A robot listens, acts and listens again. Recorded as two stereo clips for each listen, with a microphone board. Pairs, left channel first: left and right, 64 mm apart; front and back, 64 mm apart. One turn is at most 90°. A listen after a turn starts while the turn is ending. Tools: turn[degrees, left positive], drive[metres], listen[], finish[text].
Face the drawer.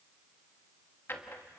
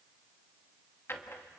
Thought: The drawer: 45° left.
Action: turn[45]
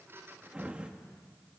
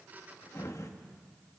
Thought: The drawer is now 20° right.
Action: turn[-20]
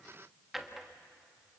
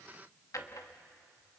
Action: finish[Facing the drawer.]